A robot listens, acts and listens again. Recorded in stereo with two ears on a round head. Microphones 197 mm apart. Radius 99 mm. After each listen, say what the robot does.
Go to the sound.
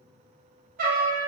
Turn 40° right.
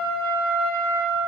Turn 95° right.
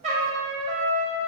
Turn 30° right.
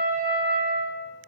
Drive 1.0 m forward.
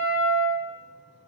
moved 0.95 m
Drive 1.0 m forward.
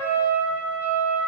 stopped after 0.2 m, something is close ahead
Turn 10° right.
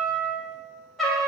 I am next to the trumpet.